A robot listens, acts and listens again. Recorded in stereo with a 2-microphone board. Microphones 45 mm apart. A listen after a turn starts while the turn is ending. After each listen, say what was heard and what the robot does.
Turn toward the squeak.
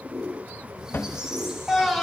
Turn 30° right.
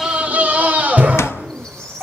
So it is at 15° left. Turn 15° left.
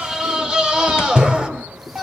Keep listening.
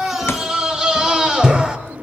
Keep listening.
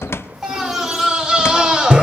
I heard a squeak from this way, but can't make it out now.